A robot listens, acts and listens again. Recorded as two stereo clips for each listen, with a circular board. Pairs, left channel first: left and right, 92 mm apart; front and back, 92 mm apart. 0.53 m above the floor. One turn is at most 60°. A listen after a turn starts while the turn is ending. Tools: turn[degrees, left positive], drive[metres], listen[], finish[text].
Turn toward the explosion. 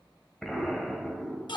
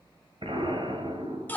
Thought: The explosion: 175° left.
Action: turn[60]
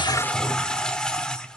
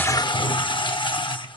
Thought: Nothing new. It was at 115° left.
Action: turn[60]
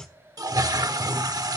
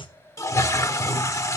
Thought: Nothing new. It was at 55° left.
Action: turn[55]
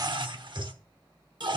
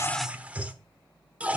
Action: finish[I heard an explosion from this way, but can't make it out now.]